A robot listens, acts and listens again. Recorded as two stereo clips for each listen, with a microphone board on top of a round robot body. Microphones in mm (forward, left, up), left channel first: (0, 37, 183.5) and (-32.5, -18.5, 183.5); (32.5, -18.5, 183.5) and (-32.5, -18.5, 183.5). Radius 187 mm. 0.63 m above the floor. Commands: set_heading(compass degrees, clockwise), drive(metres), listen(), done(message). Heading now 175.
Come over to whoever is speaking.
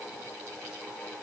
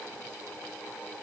listen()
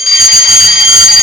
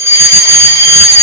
listen()
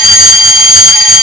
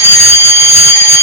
done("I can't make out anyone speaking, only a fire alarm.")